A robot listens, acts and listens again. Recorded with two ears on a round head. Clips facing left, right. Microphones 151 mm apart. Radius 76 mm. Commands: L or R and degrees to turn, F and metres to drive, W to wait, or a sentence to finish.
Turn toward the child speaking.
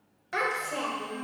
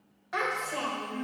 L40
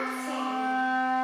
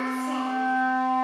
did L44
W
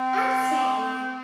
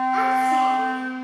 W
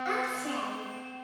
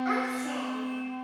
L40
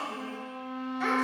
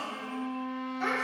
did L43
L10
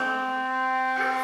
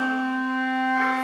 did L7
W
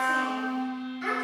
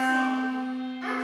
Found it: a child speaking, straight ahead, 2 to 4 m away.